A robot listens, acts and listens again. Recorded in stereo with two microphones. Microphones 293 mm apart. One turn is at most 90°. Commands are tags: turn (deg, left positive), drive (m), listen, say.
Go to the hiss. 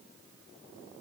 <listen/>
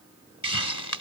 <turn deg="90"/>
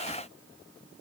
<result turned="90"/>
<listen/>
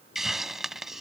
<drive m="1.0"/>
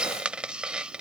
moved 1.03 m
<drive m="1.0"/>
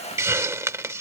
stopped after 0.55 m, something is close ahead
<turn deg="-10"/>
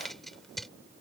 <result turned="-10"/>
<say>I am next to the hiss.</say>